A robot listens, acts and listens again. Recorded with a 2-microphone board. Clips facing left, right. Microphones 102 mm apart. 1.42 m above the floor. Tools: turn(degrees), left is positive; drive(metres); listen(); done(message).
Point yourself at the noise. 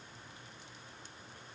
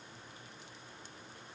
listen()
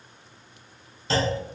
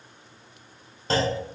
turn(degrees=-45)
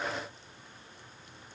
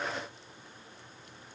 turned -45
listen()
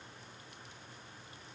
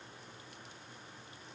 done("I heard a clunk, but can't make it out now. It was about straight ahead or 90° right.")